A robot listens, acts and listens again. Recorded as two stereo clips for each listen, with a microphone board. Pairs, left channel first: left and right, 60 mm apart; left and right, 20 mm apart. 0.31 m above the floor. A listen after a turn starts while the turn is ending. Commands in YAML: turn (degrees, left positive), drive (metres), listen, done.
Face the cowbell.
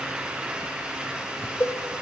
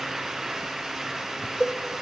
turn: 35
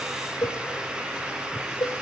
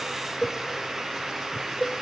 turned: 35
turn: 110
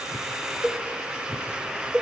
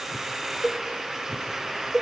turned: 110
turn: -15
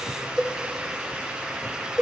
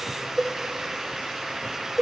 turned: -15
done: "Facing the cowbell, 2 to 4 m away."